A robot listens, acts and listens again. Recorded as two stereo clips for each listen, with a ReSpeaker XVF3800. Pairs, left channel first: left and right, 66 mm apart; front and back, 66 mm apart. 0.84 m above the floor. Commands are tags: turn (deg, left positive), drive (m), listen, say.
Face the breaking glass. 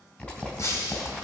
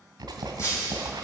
<turn deg="45"/>
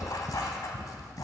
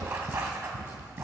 <say>I heard breaking glass from this way, but can't make it out now.</say>